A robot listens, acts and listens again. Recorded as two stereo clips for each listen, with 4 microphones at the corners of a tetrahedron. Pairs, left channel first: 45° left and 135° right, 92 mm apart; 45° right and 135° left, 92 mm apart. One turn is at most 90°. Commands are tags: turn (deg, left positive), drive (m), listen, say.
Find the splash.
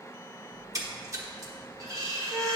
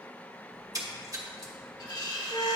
<turn deg="90"/>
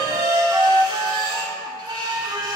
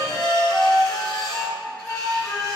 <turn deg="85"/>
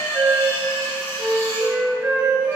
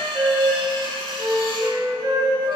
<say>I heard a splash from this way, but can't make it out now.</say>